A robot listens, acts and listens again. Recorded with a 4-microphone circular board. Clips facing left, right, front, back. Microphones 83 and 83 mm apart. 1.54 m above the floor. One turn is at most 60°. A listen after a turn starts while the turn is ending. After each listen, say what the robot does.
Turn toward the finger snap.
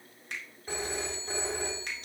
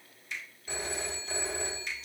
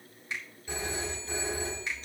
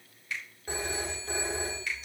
Turn 60° left.
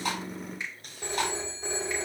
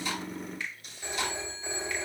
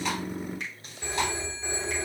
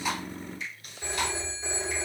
Turn 20° left.
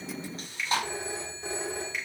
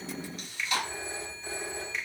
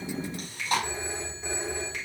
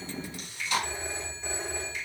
Found it: a finger snap, straight ahead, 2 to 4 m away.